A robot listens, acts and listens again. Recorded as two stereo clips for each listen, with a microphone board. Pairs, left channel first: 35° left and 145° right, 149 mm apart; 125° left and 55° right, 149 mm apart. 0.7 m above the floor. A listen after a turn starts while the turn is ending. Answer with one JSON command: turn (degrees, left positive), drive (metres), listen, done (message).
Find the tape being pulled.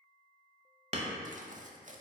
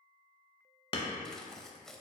{"turn": -150}
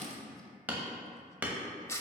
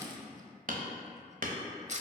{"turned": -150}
{"turn": -30}
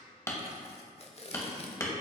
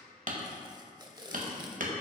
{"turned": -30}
{"done": "Found it: tape being pulled, straight ahead, under 1 m away."}